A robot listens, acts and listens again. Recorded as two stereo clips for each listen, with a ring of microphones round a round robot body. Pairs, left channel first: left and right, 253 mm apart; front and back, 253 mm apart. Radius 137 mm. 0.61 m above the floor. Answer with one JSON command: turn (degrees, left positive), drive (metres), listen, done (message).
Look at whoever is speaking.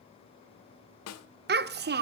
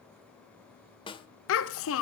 {"turn": -40}
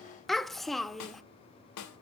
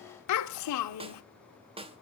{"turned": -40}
{"done": "Found it: a child speaking, straight ahead, under 1 m away."}